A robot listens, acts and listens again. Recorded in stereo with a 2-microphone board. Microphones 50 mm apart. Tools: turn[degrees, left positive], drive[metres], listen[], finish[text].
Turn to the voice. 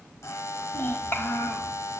Thought: The child speaking: about 45° left or 135° left.
Action: turn[45]
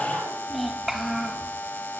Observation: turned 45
Action: finish[Facing the child speaking, over 4 m away.]